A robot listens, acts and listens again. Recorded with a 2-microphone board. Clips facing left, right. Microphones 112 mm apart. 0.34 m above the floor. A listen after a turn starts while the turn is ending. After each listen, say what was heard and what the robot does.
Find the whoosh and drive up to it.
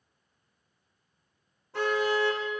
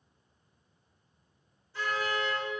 Keep listening.
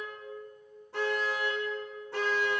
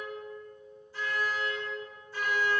Keep listening.
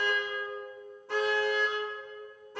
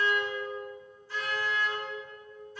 I can't make out a whoosh, only a car horn.